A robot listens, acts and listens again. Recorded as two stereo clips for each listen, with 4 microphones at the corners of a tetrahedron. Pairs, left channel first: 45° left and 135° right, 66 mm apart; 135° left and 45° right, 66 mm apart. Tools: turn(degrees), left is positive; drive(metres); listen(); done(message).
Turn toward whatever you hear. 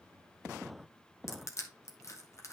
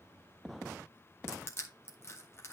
turn(degrees=85)
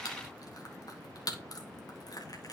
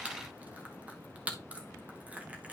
turn(degrees=25)
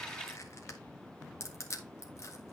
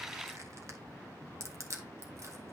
done("Facing the crushing.")